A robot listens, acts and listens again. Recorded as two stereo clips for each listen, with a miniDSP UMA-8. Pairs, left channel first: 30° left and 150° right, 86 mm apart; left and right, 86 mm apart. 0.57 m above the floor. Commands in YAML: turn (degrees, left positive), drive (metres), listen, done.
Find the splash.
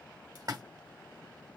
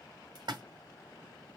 turn: -115
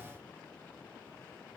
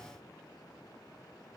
done: "Facing where the splash came from. I can't hear it now."